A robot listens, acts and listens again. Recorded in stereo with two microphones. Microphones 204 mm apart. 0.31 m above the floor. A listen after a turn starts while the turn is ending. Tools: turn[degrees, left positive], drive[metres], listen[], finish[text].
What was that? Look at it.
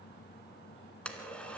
Action: turn[30]
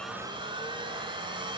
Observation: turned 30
Thought: So it is at 25° right.
Action: turn[-25]
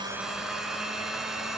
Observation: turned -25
Action: finish[Found it: a blender, straight ahead.]